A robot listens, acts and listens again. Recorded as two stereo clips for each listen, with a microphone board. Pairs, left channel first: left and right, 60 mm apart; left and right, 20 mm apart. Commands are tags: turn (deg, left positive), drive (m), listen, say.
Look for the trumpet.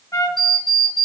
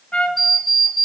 <turn deg="70"/>
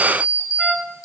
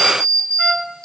<say>Found it: a trumpet, straight ahead, under 1 m away.</say>